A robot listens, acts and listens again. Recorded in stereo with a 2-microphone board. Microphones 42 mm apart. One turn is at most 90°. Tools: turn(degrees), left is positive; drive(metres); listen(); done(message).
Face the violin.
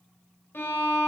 turn(degrees=65)
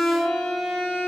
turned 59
done("Found it: a violin, straight ahead.")